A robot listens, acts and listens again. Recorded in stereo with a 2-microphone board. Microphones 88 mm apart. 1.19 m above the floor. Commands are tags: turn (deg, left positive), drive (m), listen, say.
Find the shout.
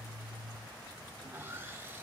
<listen/>
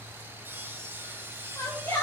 <turn deg="35"/>
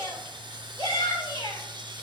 <turn deg="105"/>
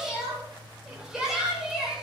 <say>Found it: a shout, straight ahead, over 4 m away.</say>